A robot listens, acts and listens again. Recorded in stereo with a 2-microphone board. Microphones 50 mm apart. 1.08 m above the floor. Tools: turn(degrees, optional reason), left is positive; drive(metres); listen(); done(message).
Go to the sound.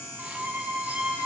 turn(degrees=-25, reason="The violin: about 25° right or 155° right.")
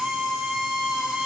drive(metres=1.0)
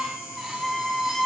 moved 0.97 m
drive(metres=1.0)
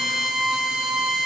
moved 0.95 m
drive(metres=1.0)
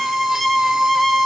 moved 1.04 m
drive(metres=1.0)
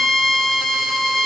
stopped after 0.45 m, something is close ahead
done("Arrived at the violin, straight ahead.")